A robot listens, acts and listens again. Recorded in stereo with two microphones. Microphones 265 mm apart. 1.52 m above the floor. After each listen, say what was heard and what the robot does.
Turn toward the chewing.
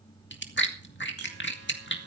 The chewing: about 45° left or 135° left. Turn 45° left.
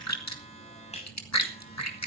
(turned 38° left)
So it is at 95° left. Turn 95° left.
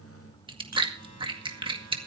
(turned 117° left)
The chewing is now 20° right. Turn 20° right.
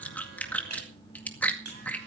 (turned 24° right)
Found it: chewing, straight ahead.